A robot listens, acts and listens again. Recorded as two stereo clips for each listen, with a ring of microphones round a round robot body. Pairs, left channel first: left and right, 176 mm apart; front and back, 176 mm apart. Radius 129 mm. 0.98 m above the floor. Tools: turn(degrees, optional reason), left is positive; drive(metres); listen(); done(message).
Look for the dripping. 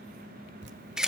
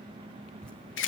turn(degrees=-85, reason="The dripping: 85° right.")
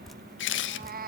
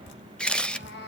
done("Facing the dripping.")